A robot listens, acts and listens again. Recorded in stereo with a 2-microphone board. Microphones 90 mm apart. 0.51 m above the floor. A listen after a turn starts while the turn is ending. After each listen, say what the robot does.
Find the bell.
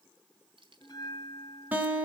Turn 45° left.
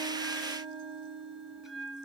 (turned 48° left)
Found it: a bell, straight ahead, 1 to 2 m away.